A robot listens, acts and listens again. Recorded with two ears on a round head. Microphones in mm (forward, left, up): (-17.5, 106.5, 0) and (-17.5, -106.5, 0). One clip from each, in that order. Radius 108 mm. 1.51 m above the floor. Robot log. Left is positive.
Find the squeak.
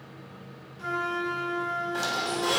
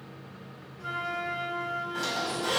note: The squeak: about 35° left or 145° left.
cmd yaw +35
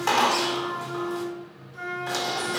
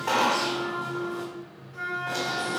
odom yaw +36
note: So it is at 105° left.
cmd yaw +105
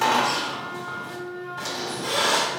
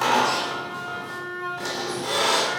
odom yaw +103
end: Facing the squeak.